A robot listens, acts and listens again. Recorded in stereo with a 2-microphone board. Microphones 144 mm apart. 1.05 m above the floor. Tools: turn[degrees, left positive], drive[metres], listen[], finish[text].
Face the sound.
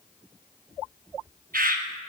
Action: turn[-90]
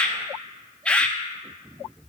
Action: finish[Facing the bird, under 1 m away.]